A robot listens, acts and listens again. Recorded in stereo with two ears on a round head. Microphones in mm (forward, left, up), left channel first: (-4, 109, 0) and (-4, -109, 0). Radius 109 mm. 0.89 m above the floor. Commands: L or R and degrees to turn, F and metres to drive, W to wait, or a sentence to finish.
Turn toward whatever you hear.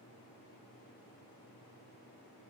W
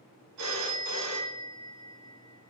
R90
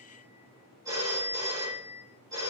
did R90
R15
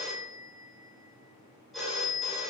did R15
Facing the phone ringing, 2 to 4 m away.